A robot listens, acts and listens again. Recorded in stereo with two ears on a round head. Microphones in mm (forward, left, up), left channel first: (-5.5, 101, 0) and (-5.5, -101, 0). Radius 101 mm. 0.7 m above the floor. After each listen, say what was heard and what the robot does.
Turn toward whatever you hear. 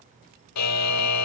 Turn 90° left.
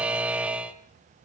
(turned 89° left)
Facing the buzzer, 1 to 2 m away.